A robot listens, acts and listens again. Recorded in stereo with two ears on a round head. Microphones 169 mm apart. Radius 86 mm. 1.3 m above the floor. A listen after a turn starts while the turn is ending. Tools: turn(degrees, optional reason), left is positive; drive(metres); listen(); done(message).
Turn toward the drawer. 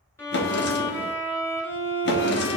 turn(degrees=60, reason="The drawer: about 60° left or 120° left.")
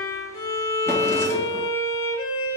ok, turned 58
listen()
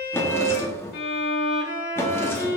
turn(degrees=15, reason="So it is at 15° left.")
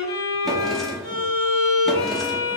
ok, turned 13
done("Found it: a drawer, straight ahead.")